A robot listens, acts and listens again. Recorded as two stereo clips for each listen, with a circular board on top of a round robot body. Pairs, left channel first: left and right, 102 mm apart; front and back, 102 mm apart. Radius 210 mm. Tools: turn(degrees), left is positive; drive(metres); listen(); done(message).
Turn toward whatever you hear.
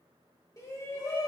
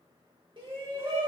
turn(degrees=150)
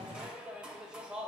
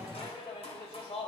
turn(degrees=-10)
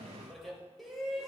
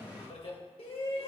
done("Facing the shout, 2 to 4 m away.")